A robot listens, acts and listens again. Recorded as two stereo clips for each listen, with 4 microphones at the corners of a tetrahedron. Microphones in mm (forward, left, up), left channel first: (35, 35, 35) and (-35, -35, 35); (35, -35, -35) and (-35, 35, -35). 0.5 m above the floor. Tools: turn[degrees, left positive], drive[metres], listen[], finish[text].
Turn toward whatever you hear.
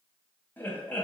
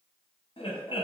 Thought: The laughter: 30° right.
Action: turn[-30]
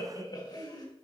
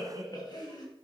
Action: finish[Found it: laughter, straight ahead, 2 to 4 m away.]